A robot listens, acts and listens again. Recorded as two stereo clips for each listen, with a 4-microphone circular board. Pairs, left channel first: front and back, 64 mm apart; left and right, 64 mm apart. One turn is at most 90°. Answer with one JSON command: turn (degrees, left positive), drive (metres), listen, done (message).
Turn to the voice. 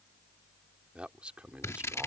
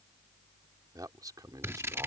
{"turn": -90}
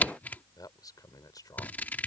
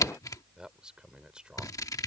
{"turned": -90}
{"turn": -15}
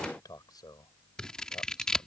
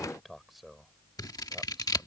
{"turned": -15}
{"done": "Facing the man speaking."}